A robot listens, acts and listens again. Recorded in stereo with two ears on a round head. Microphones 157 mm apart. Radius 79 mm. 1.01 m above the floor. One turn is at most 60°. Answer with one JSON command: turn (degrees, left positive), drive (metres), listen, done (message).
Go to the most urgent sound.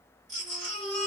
{"turn": -60}
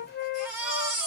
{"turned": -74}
{"drive": 1.0}
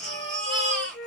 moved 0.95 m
{"drive": 1.0}
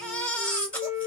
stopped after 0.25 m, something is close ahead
{"turn": 10}
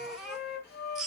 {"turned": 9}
{"done": "Arrived at the baby crying, straight ahead."}